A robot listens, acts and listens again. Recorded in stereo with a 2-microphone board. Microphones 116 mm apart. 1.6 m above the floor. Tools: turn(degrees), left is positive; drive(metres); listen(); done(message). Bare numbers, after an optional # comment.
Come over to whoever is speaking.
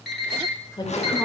# The woman speaking: about 40° left or 140° left.
turn(40)
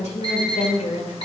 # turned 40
# So it is at 95° left.
turn(95)
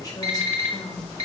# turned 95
listen()
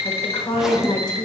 # The woman speaking is now 35° left.
turn(35)
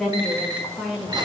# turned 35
drive(1.0)
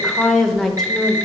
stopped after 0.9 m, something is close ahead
done("I am next to the woman speaking.")